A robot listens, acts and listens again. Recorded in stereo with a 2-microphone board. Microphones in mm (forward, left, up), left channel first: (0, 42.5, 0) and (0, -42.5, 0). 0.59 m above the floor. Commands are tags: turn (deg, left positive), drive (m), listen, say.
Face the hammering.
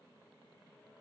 <listen/>
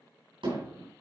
<turn deg="-90"/>
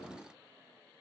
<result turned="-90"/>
<listen/>
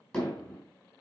<say>Found it: hammering, straight ahead, over 4 m away.</say>